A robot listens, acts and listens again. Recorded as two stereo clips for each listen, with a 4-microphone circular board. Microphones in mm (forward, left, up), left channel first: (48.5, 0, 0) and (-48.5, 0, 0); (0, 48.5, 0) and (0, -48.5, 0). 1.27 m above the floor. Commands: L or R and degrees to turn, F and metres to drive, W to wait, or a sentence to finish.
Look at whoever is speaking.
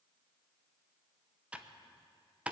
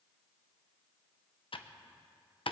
W
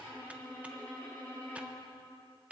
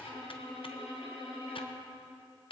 W
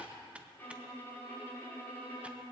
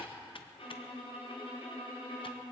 I can't make out anyone speaking to turn to.